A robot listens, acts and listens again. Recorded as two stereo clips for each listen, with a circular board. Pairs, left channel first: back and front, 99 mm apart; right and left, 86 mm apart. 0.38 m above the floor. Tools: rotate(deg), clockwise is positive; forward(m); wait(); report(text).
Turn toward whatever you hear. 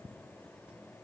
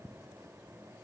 wait()
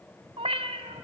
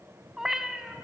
report("Facing the cat meowing.")